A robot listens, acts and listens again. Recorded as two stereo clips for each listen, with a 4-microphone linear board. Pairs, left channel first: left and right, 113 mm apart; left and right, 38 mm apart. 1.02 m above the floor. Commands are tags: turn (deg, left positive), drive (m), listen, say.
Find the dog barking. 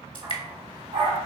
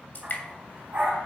<turn deg="-45"/>
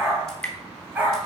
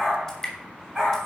<turn deg="-15"/>
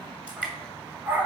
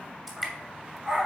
<turn deg="-20"/>
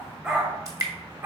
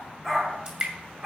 <turn deg="-20"/>
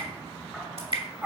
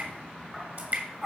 <turn deg="-10"/>
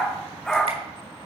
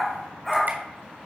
<say>Facing the dog barking.</say>